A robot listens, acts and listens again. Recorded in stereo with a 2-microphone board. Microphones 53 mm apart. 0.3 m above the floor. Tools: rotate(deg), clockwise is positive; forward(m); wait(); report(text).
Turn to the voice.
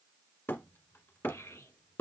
rotate(-90)
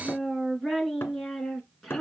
report("Found it: a child speaking, straight ahead, 2 to 4 m away.")